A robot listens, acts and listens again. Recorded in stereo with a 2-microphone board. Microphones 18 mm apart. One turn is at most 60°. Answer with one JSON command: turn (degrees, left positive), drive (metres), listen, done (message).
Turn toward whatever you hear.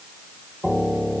{"turn": 30}
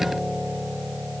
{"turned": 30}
{"turn": 10}
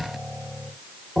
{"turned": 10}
{"done": "Found it: a piano, straight ahead."}